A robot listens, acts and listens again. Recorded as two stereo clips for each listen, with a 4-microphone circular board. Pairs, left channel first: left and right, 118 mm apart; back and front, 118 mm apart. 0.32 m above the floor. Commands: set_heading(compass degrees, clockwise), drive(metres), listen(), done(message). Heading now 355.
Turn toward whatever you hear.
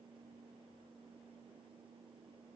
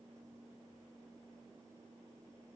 listen()
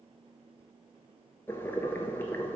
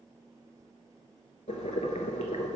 set_heading(195)
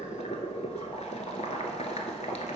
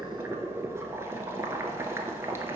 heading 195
set_heading(125)
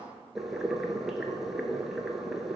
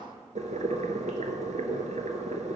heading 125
done("Found it: boiling, straight ahead.")